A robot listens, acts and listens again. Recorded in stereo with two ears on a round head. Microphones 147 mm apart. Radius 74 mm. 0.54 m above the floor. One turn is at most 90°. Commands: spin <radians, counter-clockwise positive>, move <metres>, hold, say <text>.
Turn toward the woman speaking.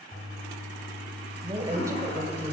spin -0.52
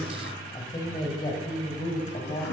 spin 0.61
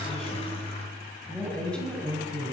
say Found it: a woman speaking, straight ahead.